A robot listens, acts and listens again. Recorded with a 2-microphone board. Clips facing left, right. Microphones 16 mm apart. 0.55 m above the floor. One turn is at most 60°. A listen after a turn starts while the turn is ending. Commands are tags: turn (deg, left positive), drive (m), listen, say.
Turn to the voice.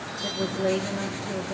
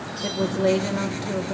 <turn deg="-45"/>
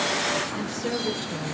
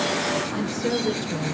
<turn deg="-10"/>
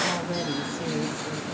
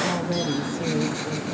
<say>Facing the woman speaking, 1 to 2 m away.</say>